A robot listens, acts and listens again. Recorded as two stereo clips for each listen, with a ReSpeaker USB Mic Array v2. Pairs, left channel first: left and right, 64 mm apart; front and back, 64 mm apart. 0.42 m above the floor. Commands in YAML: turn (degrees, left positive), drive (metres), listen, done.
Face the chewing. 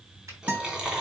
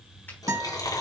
turn: -15
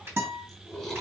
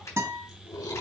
done: "Facing the chewing."